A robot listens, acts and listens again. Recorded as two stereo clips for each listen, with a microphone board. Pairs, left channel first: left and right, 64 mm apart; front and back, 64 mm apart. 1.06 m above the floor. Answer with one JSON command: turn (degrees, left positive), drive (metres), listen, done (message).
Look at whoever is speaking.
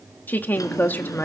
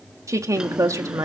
{"turn": 150}
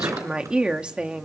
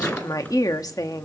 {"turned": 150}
{"turn": -15}
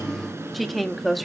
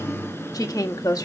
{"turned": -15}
{"done": "Found it: a woman speaking, straight ahead, 1 to 2 m away."}